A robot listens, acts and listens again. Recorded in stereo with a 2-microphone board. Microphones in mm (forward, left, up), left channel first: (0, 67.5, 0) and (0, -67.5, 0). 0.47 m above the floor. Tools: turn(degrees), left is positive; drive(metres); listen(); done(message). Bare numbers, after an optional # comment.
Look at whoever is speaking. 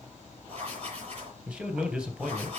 turn(-30)
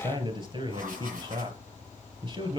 # So it is at 140° right.
turn(-140)
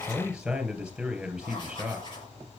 done("Facing the man speaking.")